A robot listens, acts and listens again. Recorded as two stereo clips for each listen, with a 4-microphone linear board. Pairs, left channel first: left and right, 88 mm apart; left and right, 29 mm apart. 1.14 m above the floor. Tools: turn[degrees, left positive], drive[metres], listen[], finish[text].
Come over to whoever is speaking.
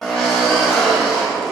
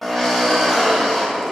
Action: listen[]
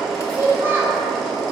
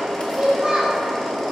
Thought: The child speaking: about 25° right or 155° right.
Action: turn[-25]
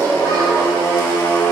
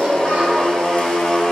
Action: listen[]
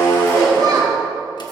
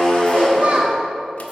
Thought: So it is at 130° right.
Action: turn[-130]
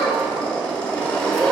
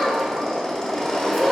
Action: drive[1.0]
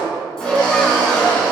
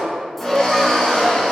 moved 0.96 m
Action: listen[]
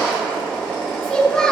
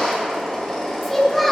Thought: The child speaking is now 10° left.
Action: turn[10]
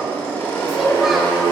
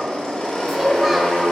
Action: drive[1.0]
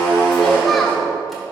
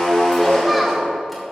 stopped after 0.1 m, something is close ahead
Action: finish[Arrived at the child speaking, straight ahead.]